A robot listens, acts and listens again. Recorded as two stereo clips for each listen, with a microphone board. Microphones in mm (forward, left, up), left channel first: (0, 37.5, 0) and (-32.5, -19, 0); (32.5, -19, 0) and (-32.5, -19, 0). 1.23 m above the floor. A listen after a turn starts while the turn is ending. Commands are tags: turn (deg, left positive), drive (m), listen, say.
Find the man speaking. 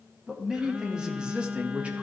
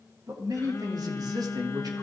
<turn deg="170"/>
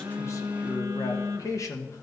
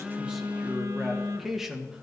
<turn deg="100"/>
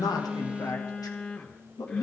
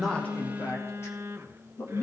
<turn deg="55"/>
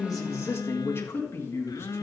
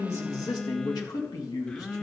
<turn deg="10"/>
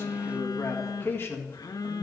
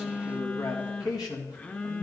<say>Facing the man speaking.</say>